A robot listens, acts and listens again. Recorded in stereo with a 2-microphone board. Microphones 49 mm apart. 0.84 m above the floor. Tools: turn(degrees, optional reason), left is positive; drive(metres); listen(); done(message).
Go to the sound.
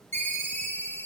turn(degrees=55, reason="The ringtone: about 55° left or 125° left.")
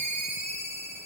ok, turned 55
turn(degrees=70, reason="So it is at 70° left.")
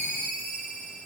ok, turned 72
drive(metres=1.0)
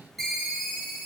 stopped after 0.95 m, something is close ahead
done("I am next to the ringtone.")